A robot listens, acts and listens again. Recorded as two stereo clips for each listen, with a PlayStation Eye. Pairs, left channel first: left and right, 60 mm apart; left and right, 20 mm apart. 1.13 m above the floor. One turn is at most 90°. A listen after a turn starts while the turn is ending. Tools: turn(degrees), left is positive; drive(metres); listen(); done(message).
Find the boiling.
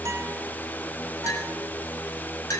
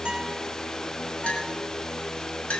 listen()
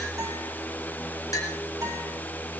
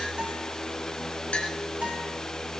listen()
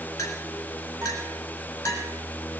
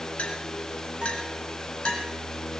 done("I can't make out boiling to turn to.")